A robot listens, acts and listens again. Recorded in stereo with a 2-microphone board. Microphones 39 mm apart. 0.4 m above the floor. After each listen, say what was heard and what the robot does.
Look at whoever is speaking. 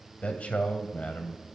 The man speaking: about 35° left or 145° left. Turn 35° left.
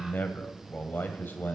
So it is at 105° left. Turn 105° left.
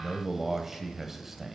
The man speaking is now 10° right. Turn 10° right.
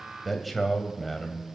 Facing the man speaking, 1 to 2 m away.